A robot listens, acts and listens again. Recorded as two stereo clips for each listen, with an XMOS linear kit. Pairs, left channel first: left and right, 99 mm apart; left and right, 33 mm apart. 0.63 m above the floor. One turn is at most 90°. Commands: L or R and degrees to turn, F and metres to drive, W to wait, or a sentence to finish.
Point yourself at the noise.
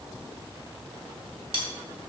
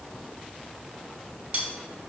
R55
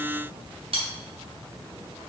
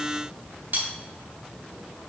R70
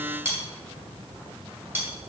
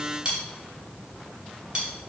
R20
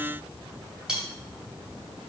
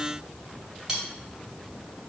Facing the cutlery clinking.